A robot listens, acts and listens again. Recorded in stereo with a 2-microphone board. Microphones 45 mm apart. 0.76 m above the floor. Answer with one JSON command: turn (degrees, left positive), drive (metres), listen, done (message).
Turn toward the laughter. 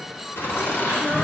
{"turn": 70}
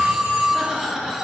{"turn": -20}
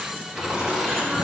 {"turn": -20}
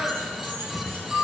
{"done": "Found it: laughter, straight ahead."}